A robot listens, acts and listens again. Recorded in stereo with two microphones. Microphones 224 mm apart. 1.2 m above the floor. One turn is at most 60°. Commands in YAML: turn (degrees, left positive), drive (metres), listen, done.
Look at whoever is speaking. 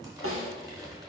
listen: true
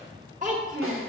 turn: -35
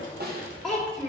done: "Found it: a child speaking, straight ahead."